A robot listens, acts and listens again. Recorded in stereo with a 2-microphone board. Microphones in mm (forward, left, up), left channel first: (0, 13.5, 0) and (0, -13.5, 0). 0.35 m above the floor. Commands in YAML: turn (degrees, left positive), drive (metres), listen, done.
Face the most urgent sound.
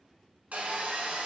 listen: true
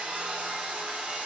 listen: true
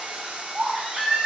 turn: -55
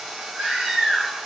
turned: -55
turn: -55
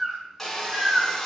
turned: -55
turn: -25
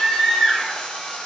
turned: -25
done: "Found it: a baby crying, straight ahead."